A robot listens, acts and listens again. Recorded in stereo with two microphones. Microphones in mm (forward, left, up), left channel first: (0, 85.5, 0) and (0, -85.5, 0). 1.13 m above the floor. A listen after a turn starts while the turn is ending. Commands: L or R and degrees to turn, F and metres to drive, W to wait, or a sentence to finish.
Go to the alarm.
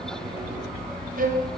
W
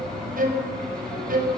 W
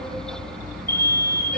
L65
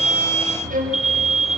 F1.0
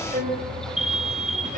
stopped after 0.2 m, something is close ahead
Blocked. The alarm is further on, straight ahead.